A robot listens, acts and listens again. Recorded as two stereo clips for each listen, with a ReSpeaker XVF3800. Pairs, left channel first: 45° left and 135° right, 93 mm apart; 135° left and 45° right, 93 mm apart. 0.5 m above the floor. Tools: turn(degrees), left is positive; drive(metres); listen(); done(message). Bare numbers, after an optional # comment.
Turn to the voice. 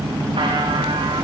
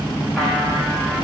listen()
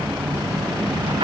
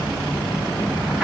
listen()
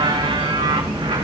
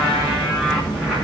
done("I can't make out anyone speaking to turn to.")